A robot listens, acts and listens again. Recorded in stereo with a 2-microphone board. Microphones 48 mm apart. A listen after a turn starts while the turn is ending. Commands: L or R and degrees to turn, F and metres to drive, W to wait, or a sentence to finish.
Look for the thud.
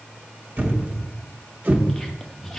R40
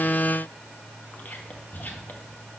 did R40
W
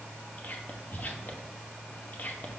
I heard a thud, but can't make it out now. It was about straight ahead or 100° right.